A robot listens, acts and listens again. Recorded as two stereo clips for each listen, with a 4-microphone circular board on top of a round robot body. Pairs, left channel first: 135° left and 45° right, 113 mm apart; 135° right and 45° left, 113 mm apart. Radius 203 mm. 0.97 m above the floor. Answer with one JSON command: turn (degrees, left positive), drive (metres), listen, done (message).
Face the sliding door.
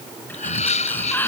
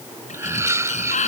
{"turn": -150}
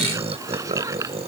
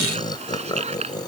{"turn": 20}
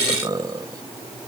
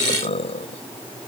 {"listen": true}
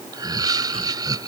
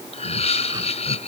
{"listen": true}
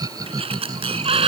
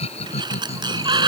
{"done": "Facing the sliding door."}